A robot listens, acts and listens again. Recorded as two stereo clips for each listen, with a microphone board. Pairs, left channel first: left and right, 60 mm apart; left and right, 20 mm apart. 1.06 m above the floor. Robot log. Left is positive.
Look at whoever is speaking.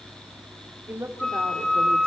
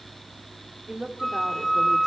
note: The woman speaking: about 40° right or 140° right.
cmd yaw -40
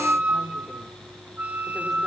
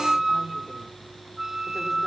cmd idle
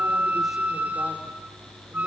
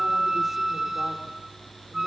cmd idle
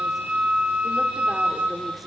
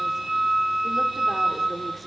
end: I heard a woman speaking, but can't make it out now. It was about straight ahead or 100° right.